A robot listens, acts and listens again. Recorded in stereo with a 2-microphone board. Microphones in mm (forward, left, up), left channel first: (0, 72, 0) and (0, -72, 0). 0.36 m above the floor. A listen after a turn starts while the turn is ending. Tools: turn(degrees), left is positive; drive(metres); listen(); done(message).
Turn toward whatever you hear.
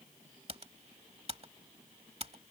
turn(degrees=-45)
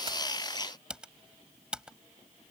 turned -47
done("Found it: typing on a keyboard, straight ahead.")